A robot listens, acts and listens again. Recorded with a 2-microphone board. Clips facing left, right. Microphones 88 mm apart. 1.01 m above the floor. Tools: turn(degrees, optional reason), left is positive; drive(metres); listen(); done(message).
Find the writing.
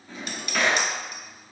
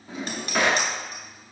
listen()
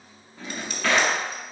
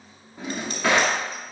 listen()
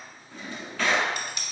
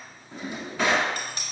done("I can't make out writing to turn to.")